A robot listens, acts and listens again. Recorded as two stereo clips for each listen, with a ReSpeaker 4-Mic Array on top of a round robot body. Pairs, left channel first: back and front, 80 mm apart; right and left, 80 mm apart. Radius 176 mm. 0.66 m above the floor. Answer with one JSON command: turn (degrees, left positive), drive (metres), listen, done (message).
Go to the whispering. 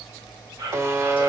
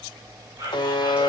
{"turn": 45}
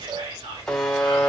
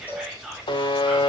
{"drive": 1.0}
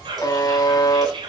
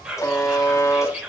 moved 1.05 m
{"turn": 10}
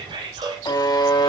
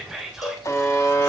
{"drive": 1.0}
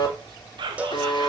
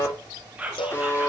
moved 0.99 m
{"turn": 15}
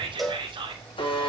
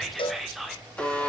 {"drive": 1.0}
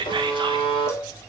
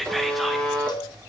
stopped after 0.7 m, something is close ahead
{"done": "I am next to the whispering."}